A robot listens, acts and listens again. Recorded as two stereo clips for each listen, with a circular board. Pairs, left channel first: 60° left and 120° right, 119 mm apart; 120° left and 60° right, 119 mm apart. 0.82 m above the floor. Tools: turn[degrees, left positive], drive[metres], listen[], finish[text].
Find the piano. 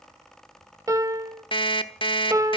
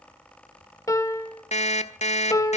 Thought: The piano: straight behind.
Action: turn[180]
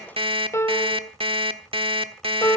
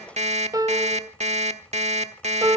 Action: finish[Facing the piano.]